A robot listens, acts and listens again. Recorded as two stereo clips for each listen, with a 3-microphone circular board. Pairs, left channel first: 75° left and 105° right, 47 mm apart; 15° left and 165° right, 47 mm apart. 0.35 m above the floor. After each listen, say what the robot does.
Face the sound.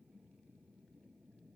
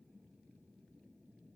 Keep listening.
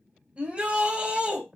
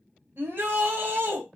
Turn 165° right.
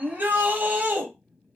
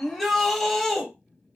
Turn 70° right.
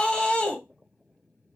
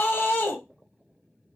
Turn 15° left.
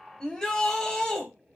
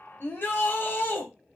Found it: a shout, straight ahead, 1 to 2 m away.